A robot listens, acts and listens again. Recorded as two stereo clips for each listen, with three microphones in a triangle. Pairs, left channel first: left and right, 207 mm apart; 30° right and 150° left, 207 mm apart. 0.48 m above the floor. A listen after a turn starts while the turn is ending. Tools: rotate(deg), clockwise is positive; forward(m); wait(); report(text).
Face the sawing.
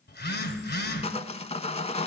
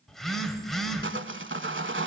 rotate(-145)
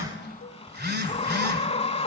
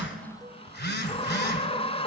rotate(-30)
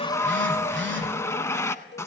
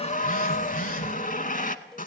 rotate(-15)
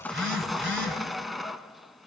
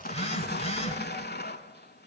report("Facing the sawing, under 1 m away.")